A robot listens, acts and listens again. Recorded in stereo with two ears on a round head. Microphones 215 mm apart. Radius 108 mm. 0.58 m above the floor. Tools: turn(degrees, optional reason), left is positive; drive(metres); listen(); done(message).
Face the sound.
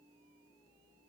listen()
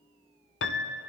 turn(degrees=50, reason="The piano: about 50° left or 130° left.")
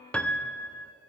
done("Facing the piano.")